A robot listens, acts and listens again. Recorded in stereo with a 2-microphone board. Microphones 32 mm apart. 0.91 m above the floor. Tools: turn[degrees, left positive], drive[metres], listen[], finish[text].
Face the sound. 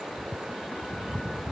Action: listen[]
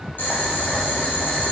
Thought: The boiling: about 65° left or 115° left.
Action: turn[65]
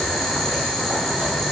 Thought: So it is at 10° left.
Action: turn[10]
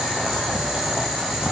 Action: finish[Facing the boiling, 1 to 2 m away.]